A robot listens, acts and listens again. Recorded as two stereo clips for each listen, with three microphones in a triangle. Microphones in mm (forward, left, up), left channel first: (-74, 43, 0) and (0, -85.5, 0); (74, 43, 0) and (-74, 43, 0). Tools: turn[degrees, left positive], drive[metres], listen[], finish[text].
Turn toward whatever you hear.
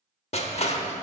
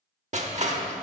Thought: The crushing: 155° left.
Action: turn[155]
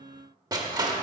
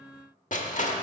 Action: finish[Found it: crushing, straight ahead.]